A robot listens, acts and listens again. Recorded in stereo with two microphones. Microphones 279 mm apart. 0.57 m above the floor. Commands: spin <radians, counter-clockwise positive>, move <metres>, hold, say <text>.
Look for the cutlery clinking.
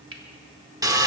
spin -0.87
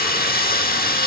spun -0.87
hold
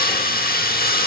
hold
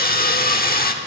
say I heard cutlery clinking, but can't make it out now. It was about straight ahead or 80° right.